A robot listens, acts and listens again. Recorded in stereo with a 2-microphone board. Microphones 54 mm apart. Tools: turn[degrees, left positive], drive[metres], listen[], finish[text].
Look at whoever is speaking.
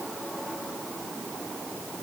Action: listen[]
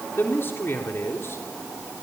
Thought: The man speaking: about 50° left or 130° left.
Action: turn[50]
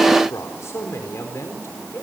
Thought: So it is at 55° left.
Action: turn[55]
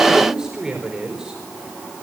Thought: The man speaking is now 15° right.
Action: turn[-15]
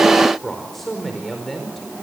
Action: finish[Found it: a man speaking, straight ahead, over 4 m away.]